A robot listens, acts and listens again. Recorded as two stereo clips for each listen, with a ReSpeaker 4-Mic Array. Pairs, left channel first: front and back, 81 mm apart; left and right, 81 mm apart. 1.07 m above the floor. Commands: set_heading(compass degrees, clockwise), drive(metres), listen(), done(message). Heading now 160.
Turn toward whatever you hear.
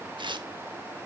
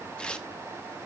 set_heading(355)
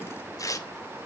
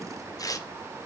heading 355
set_heading(310)
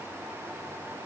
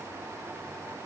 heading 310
listen()
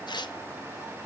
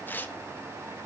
set_heading(290)
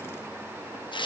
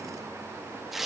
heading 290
done("Facing the tearing paper, 1 to 2 m away.")